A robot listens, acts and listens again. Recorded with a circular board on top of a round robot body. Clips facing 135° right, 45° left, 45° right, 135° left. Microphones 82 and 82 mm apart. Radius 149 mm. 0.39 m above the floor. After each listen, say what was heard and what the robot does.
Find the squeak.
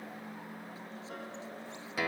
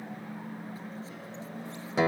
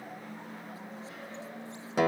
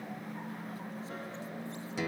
Keep listening.
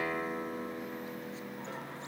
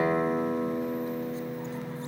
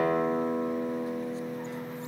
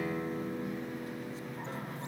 Keep listening.
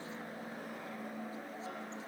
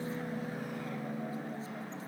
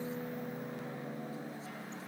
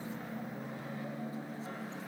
I can't make out a squeak, only a guitar.